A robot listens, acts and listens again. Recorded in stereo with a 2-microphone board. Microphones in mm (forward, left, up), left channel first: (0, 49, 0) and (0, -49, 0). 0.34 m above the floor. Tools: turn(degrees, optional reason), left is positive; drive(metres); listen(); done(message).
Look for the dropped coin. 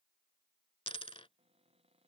turn(degrees=70, reason="The dropped coin: about 70° left or 110° left.")
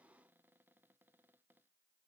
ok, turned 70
listen()
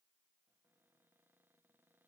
done("I heard a dropped coin, but can't make it out now. It was about straight ahead or 40° left.")